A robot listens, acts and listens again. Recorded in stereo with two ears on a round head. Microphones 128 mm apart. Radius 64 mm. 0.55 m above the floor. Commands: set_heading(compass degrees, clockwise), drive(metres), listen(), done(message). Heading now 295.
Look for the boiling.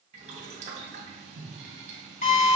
set_heading(350)
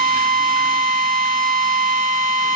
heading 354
listen()
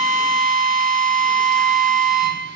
listen()
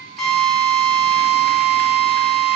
done("I heard boiling, but can't make it out now. It was about 5° left or 65° right.")